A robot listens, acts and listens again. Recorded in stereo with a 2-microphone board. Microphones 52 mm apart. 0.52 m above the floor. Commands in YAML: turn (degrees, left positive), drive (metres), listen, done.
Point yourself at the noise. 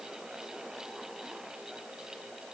listen: true
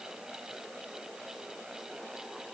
listen: true
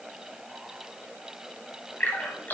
turn: 35
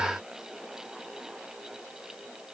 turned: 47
listen: true
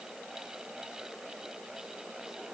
done: "I heard a splash, but can't make it out now. It was about 10° right or 95° left."